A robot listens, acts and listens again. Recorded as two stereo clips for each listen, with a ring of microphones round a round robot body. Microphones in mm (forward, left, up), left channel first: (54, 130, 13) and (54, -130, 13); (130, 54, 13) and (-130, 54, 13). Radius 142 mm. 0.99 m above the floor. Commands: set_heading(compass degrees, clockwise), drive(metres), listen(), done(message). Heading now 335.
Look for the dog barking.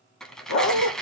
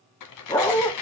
set_heading(255)
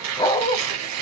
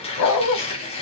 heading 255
set_heading(235)
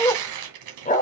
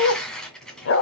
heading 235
set_heading(200)
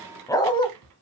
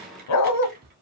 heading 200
set_heading(180)
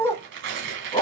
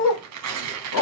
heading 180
set_heading(160)
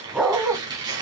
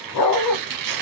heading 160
done("Found it: a dog barking, straight ahead, 2 to 4 m away.")